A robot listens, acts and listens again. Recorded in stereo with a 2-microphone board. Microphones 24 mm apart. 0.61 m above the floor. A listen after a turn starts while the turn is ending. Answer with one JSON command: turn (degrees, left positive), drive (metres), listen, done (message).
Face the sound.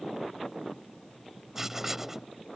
{"turn": -15}
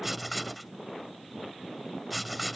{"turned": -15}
{"done": "Found it: writing, straight ahead."}